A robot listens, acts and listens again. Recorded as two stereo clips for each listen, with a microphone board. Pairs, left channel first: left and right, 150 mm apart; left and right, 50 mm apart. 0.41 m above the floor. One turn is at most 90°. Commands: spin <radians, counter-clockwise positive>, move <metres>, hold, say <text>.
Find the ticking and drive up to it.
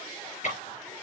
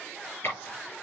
spin 0.96
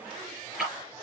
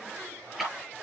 move 1.0
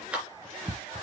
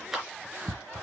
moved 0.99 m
move 1.0
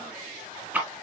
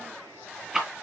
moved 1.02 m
spin -0.17
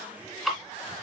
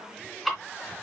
move 1.0
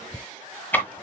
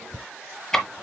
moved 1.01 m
spin 0.26
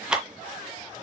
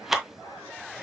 move 1.0
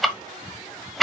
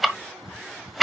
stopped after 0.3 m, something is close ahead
say I am next to the ticking.